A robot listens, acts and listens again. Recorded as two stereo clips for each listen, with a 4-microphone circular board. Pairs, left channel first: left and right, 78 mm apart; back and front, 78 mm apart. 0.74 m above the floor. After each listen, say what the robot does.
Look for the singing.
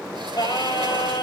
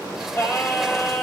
Turn 120° left.
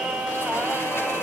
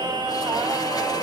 Turn 15° right.
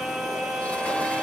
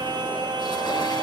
Facing the singing.